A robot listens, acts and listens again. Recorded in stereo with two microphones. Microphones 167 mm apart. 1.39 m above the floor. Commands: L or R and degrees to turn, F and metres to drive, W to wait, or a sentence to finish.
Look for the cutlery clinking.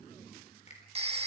W
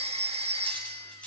L30
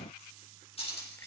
L145
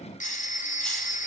W
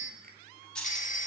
Found it: cutlery clinking, straight ahead, over 4 m away.